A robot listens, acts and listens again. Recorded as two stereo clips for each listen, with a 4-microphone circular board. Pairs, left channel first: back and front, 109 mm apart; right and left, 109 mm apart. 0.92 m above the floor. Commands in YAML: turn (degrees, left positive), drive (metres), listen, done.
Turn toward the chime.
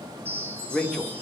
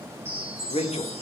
turn: 70
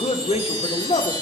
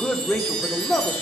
done: "Found it: a chime, straight ahead, 2 to 4 m away."